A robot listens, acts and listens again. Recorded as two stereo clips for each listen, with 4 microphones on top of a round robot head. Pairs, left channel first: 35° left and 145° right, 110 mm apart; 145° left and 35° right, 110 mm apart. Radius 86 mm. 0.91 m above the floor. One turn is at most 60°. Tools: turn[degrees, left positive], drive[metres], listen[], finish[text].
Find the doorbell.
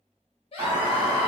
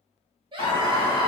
Thought: The doorbell: 165° left.
Action: turn[60]
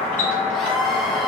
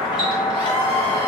Thought: The doorbell is now 105° left.
Action: turn[60]
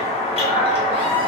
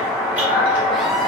Thought: The doorbell is now 40° left.
Action: turn[40]
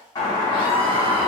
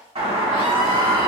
Thought: The doorbell is now 15° right.
Action: turn[-15]
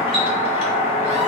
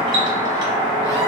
Action: finish[Facing the doorbell.]